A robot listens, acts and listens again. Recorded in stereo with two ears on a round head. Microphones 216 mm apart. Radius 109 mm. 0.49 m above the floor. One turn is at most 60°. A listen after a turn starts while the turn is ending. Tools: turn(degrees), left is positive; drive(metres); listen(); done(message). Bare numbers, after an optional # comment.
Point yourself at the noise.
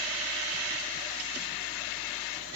listen()
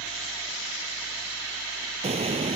# The explosion: about 25° right or 155° right.
turn(-25)
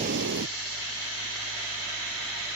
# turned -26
# So it is at 130° right.
turn(-60)
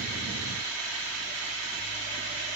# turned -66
# Nothing new. It was at 60° right.
turn(-60)
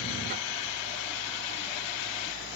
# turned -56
done("Facing where the explosion came from. I can't hear it now.")